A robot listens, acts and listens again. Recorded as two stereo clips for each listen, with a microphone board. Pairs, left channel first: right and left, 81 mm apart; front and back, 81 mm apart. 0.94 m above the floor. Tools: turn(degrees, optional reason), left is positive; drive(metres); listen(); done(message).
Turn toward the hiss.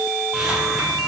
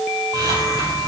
turn(degrees=175, reason="The hiss: 175° left.")
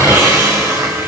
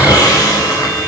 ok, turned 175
turn(degrees=40, reason="The hiss is now 40° left.")
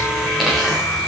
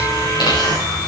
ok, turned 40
done("Found it: a hiss, straight ahead, over 4 m away.")